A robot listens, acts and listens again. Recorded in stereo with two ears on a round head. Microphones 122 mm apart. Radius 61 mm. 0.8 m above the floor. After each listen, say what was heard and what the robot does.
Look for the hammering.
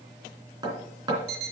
The hammering: about 30° right or 150° right. Turn 30° right.
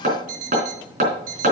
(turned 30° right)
So it is at 120° right. Turn 120° right.
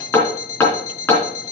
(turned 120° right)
The hammering is now 15° left. Turn 15° left.
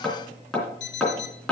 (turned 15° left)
Found it: hammering, straight ahead, 2 to 4 m away.